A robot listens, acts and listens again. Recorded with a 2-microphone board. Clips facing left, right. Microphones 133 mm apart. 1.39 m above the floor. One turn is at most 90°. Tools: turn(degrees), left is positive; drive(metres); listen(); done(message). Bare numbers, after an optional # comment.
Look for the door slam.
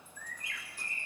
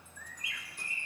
listen()
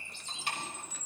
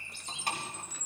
# The door slam: about 40° right or 140° right.
turn(-40)
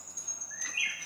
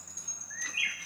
listen()
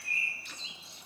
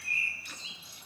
done("I heard a door slam, but can't make it out now. It was about straight ahead or 100° right.")